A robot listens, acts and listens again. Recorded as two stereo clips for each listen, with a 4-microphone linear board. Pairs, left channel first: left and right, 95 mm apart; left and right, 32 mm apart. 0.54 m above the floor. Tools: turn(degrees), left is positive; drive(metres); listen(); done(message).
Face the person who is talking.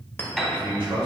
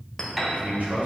turn(degrees=-65)
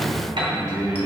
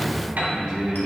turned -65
turn(degrees=-40)
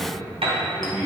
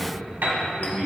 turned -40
turn(degrees=-10)
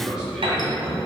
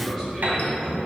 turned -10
turn(degrees=-10)
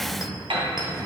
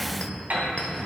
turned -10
listen()
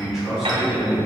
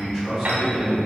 done("Found it: a man speaking, straight ahead, over 4 m away.")